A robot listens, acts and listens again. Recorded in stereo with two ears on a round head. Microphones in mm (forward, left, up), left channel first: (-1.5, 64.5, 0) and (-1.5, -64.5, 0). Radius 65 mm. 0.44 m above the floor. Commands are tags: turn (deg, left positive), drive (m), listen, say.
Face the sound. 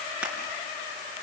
<turn deg="-30"/>
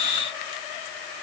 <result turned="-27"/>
<listen/>
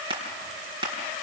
<turn deg="-140"/>
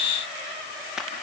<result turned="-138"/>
<say>Found it: crushing, straight ahead, 2 to 4 m away.</say>